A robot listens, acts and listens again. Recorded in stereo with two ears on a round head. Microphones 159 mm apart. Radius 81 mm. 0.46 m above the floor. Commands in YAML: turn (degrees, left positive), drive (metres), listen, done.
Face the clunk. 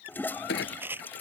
turn: 90
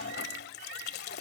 done: "Facing where the clunk came from. I can't hear it now."